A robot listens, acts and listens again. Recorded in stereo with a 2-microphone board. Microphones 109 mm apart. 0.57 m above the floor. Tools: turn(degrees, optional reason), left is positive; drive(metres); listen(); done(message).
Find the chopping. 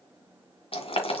listen()
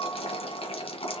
listen()
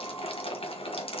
done("I can't make out chopping, only boiling.")